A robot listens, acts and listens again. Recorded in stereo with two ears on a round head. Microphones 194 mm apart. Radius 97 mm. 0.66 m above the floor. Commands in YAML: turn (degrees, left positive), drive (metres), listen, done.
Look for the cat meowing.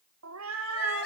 turn: -70
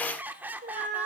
turn: -30
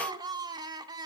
turn: -20
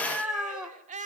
done: "Facing the cat meowing, 2 to 4 m away."